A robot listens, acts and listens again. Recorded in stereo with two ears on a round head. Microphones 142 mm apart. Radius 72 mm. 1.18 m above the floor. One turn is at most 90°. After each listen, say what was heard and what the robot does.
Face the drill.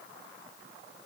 Keep listening.
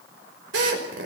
Turn 90° right.
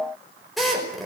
Facing the drill.